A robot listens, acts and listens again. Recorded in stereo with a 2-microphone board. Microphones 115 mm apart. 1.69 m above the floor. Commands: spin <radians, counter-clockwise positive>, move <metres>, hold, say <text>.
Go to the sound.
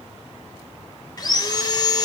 spin 0.61
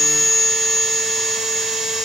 move 1.0
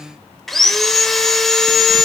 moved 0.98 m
move 1.0
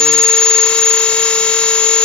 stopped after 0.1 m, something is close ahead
spin 0.17
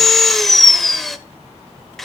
say I am next to the sawing.